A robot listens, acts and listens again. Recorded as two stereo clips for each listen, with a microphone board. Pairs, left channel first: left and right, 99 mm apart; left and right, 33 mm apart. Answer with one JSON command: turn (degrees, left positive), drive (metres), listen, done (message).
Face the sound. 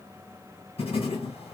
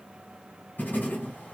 {"turn": 75}
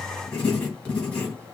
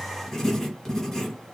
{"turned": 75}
{"turn": 10}
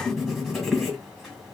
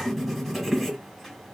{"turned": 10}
{"done": "Found it: writing, straight ahead, 1 to 2 m away."}